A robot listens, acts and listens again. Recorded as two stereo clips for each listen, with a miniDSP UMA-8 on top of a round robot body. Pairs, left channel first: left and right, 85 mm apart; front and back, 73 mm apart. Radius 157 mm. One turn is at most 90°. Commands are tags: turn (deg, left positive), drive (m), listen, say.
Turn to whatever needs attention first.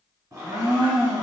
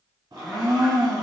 <listen/>
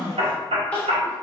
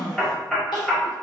<turn deg="10"/>
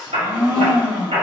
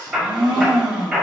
<listen/>
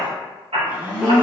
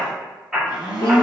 <listen/>
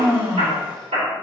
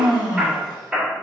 <say>Facing where the crying came from. I can't hear it now.</say>